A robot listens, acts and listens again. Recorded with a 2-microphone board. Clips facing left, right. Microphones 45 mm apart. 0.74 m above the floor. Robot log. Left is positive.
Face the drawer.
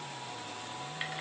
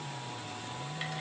cmd idle
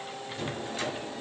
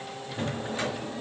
note: The drawer: about 25° right or 155° right.
cmd yaw -25
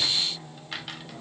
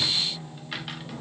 cmd idle
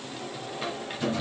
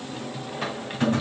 note: So it is at 130° right.
cmd yaw -130
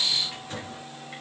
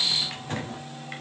note: The drawer is now 45° right.
cmd yaw -45
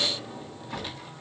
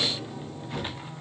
note: The drawer is now 15° left.
cmd yaw +15
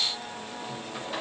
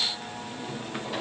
end: Facing the drawer, 1 to 2 m away.